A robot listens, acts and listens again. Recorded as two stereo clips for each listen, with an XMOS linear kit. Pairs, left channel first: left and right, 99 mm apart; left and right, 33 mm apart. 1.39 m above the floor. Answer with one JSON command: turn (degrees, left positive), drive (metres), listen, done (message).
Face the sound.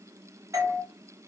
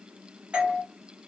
{"turn": -35}
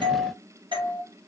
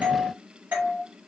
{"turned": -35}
{"turn": -105}
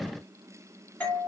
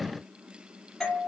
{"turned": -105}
{"turn": 15}
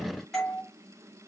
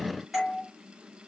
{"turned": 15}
{"done": "Found it: a doorbell, straight ahead, 1 to 2 m away."}